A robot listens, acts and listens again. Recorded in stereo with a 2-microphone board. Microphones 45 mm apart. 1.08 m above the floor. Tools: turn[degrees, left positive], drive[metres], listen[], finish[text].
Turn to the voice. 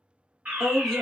Action: turn[30]
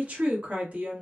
Thought: So it is at 30° right.
Action: turn[-30]
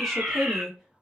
Action: finish[Found it: a woman speaking, straight ahead, 1 to 2 m away.]